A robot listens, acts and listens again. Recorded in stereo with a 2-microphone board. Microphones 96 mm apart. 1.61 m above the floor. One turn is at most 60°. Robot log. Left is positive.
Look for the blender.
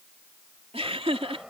cmd yaw -30
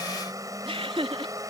note: So it is at 145° right.
cmd yaw -60
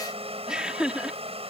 note: The blender is now 80° right.
cmd yaw -60
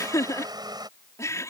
note: The blender is now 45° right.
cmd yaw -45
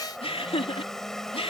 end: Found it: a blender, straight ahead.